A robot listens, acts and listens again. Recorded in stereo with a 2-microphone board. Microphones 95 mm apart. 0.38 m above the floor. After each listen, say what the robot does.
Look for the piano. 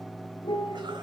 Turn 55° left.
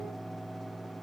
Keep listening.
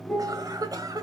Found it: a piano, straight ahead.